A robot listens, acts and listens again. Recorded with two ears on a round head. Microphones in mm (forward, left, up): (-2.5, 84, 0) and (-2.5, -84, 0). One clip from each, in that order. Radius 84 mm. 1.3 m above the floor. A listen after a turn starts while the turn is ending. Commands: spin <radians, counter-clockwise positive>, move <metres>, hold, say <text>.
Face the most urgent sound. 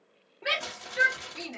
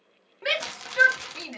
spin -0.96
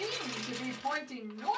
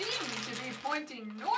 spin -1.22
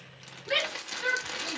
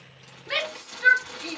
spin -0.35
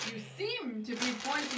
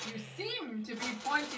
say Facing the shout.